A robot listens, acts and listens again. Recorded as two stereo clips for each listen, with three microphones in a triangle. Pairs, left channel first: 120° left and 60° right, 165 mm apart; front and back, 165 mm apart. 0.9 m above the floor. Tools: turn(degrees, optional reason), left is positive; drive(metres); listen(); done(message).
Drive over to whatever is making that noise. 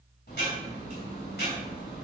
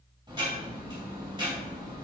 turn(degrees=120, reason="The ticking: 120° left.")
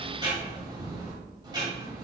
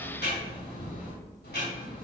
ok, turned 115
drive(metres=1.0)
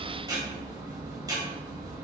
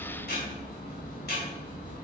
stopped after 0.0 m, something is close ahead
done("Blocked. The ticking is further on, straight ahead.")